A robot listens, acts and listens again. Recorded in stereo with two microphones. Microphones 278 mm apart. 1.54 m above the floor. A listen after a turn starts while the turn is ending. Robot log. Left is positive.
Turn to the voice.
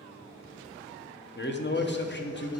note: The man speaking: about 40° left or 140° left.
cmd yaw +40
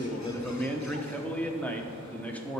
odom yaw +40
end: Found it: a man speaking, straight ahead, under 1 m away.